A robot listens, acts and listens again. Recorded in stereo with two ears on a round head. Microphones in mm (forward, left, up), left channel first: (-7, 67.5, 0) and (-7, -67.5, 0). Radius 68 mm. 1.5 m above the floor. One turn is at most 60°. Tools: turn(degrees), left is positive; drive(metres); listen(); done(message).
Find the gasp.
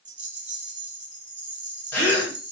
turn(degrees=30)
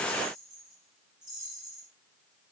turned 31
listen()
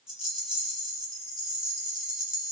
done("I heard a gasp, but can't make it out now. It was about 15° right or 135° left.")